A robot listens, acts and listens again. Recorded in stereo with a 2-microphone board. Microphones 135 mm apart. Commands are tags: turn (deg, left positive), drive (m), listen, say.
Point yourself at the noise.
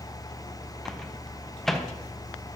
<turn deg="30"/>
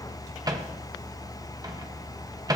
<turn deg="-30"/>
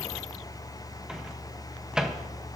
<say>Found it: a microwave, straight ahead, under 1 m away.</say>